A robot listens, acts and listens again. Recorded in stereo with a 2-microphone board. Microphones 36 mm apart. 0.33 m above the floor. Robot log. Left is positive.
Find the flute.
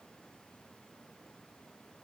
cmd idle
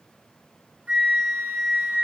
note: The flute: about 55° right or 125° right.
cmd yaw -55
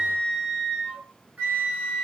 note: So it is at 55° right.
cmd yaw -55
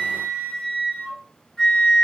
note: The flute is now 15° left.
cmd yaw +15
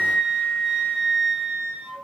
end: Facing the flute, 2 to 4 m away.